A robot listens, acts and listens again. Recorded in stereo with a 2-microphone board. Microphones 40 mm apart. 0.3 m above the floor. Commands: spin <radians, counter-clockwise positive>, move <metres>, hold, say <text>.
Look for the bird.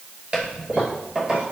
hold
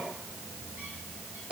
hold
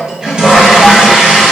say I can't make out a bird, only a toilet flushing.